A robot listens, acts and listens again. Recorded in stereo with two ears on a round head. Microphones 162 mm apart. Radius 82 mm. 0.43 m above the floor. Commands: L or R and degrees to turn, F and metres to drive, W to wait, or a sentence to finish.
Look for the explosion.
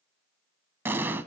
R30
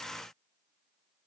W
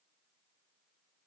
I heard an explosion, but can't make it out now. It was about 20° left or 140° right.